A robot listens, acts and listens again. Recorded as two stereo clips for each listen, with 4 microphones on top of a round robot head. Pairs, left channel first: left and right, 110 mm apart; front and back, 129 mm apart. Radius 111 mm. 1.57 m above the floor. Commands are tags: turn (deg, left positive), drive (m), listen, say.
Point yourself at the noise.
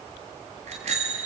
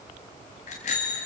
<turn deg="-50"/>
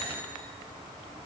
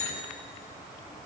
<listen/>
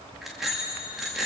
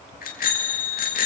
<say>Found it: a bicycle bell, straight ahead, 2 to 4 m away.</say>